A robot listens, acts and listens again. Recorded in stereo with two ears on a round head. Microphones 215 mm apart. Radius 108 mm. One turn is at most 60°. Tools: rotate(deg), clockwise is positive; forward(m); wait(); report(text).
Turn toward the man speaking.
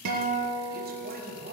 rotate(45)
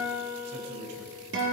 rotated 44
rotate(60)
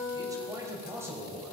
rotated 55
rotate(10)
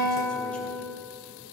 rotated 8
wait()
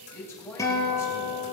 rotate(-10)
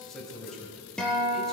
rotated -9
report("Found it: a man speaking, straight ahead.")